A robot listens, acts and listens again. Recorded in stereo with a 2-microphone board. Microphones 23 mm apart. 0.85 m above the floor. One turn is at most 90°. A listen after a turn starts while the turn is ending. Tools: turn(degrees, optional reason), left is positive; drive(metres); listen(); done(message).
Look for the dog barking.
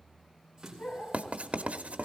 turn(degrees=65, reason="The dog barking: about 65° left or 115° left.")
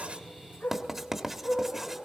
turn(degrees=45, reason="So it is at 45° left.")
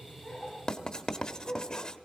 done("Facing the dog barking, over 4 m away.")